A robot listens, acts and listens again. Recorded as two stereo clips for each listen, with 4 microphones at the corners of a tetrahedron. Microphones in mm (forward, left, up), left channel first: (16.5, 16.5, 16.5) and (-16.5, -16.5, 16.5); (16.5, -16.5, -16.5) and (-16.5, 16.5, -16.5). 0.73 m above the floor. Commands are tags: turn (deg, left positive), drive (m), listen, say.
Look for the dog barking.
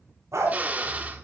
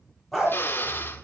<turn deg="-130"/>
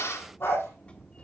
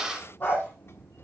<turn deg="10"/>
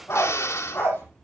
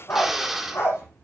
<say>Found it: a dog barking, straight ahead, over 4 m away.</say>